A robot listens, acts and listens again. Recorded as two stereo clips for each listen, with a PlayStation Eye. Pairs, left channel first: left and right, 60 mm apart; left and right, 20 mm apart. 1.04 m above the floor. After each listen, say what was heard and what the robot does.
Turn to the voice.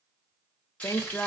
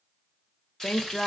The woman speaking: about 50° left or 130° left. Turn 50° left.
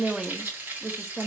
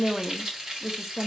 Found it: a woman speaking, straight ahead.